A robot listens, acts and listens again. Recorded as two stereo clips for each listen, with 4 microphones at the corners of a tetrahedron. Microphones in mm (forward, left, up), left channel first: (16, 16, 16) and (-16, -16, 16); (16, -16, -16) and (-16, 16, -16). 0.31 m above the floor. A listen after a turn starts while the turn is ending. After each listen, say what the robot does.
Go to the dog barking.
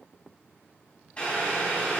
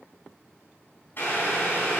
Keep listening.
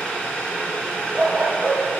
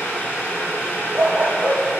Turn 170° left.
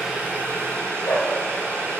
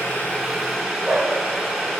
Turn 50° left.
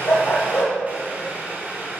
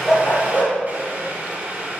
Turn 10° left.
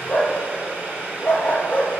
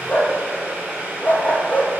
Drive 1.0 m forward.
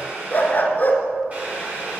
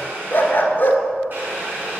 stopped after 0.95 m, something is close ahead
I am next to the dog barking.